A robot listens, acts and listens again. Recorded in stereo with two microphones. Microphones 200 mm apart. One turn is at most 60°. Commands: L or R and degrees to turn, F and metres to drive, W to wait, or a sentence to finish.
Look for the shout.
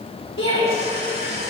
L60
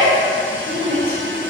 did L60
L45
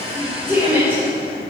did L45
R10
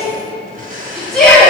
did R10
Found it: a shout, straight ahead.